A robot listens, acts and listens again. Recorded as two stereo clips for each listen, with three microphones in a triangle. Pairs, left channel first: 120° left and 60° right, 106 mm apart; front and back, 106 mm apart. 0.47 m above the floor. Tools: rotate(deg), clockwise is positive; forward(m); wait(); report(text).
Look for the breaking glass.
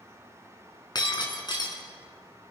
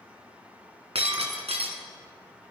rotate(-165)
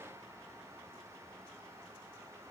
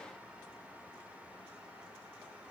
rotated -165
report("Facing where the breaking glass came from. I can't hear it now.")